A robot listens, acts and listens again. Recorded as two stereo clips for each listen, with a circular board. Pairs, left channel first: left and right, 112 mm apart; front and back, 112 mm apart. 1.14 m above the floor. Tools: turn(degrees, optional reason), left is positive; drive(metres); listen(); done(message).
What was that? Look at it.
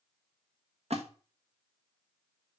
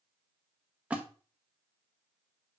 turn(degrees=-105, reason="The splash: 105° right.")
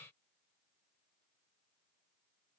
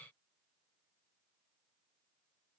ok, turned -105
done("Facing where the splash came from. I can't hear it now.")